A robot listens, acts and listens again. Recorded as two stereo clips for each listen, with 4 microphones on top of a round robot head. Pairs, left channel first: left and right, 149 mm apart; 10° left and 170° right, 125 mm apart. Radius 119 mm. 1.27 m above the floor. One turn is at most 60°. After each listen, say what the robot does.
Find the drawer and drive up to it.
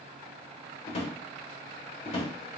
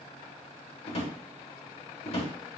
Turn 45° left.
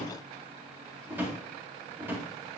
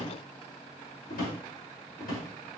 Turn 15° right.
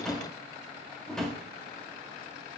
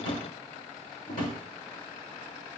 Drive 1.0 m forward.
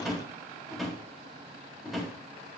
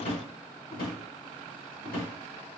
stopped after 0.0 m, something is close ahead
Blocked. The drawer is further on, straight ahead.